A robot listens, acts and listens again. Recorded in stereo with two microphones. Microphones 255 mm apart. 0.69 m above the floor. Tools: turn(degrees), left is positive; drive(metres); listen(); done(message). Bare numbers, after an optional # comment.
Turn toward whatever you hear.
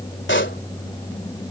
# The pop: about 45° left or 135° left.
turn(45)
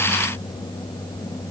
listen()
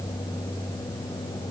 done("I heard a pop, but can't make it out now. It was about straight ahead or 90° left.")